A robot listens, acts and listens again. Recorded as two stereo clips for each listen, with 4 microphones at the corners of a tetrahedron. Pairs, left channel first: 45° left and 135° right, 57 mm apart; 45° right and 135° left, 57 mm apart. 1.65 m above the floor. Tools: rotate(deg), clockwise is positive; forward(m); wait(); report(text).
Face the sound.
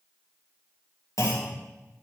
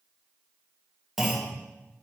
rotate(-50)
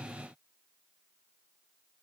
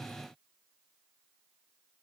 report("I heard a clunk from this way, but can't make it out now.")